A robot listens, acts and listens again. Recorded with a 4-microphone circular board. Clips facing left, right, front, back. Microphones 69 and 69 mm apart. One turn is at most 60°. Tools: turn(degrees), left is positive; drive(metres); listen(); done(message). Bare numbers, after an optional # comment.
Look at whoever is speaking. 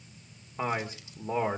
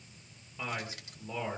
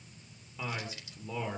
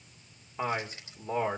# The man speaking: 130° left.
turn(60)
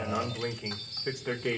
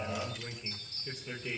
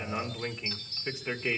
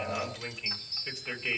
# The man speaking is now 65° left.
turn(60)
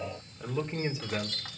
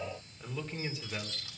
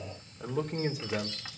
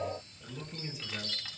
# The man speaking is now 15° left.
turn(15)
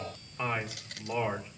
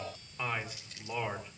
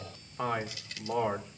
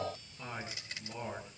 done("Facing the man speaking, 2 to 4 m away.")